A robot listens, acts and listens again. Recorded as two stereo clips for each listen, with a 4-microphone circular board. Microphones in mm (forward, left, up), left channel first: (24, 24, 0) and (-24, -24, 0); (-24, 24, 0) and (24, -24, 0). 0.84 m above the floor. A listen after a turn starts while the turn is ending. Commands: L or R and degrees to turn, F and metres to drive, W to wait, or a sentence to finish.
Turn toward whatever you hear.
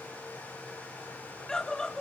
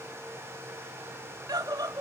R35
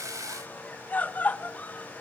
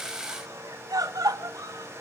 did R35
R20
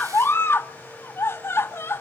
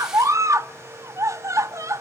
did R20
Facing the scream, 1 to 2 m away.